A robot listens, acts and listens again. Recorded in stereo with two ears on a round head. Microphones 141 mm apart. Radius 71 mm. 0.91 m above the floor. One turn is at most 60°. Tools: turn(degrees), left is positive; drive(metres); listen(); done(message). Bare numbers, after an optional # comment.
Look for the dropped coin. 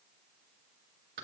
listen()
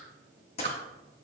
# The dropped coin: about 40° left or 140° left.
turn(40)
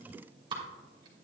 listen()
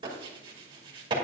done("I heard a dropped coin, but can't make it out now. It was about straight ahead or 100° left.")